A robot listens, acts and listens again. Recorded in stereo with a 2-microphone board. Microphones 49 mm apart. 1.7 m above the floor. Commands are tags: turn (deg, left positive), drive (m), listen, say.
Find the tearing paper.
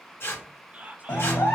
<turn deg="65"/>
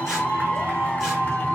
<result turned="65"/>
<listen/>
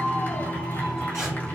<listen/>
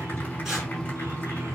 <say>I heard tearing paper, but can't make it out now. It was about straight ahead or 50° left.</say>